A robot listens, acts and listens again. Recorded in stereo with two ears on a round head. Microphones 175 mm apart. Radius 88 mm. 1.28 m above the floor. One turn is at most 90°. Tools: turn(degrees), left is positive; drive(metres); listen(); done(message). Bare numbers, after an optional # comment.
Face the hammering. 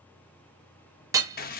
# The hammering: about 15° right or 165° right.
turn(-15)
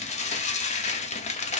listen()
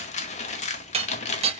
# So it is at 150° right.
turn(-90)
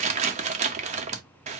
# Nothing new. It was at 60° right.
turn(-60)
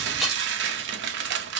listen()
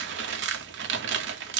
done("I heard hammering from this way, but can't make it out now.")